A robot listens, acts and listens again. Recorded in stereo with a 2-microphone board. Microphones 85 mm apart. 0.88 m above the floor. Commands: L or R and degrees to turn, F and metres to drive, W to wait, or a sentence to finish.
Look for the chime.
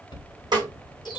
L60
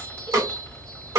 L10
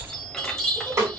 Facing the chime, 1 to 2 m away.